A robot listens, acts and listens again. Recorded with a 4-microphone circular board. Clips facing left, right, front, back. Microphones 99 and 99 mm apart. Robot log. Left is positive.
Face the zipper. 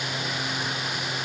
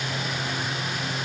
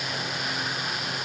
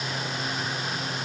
cmd idle
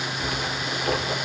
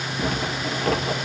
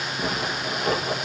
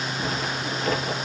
note: The zipper: 50° right.
cmd yaw -50
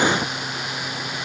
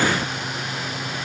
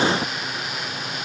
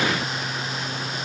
cmd idle
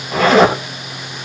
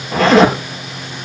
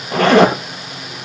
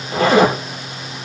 end: Facing the zipper, over 4 m away.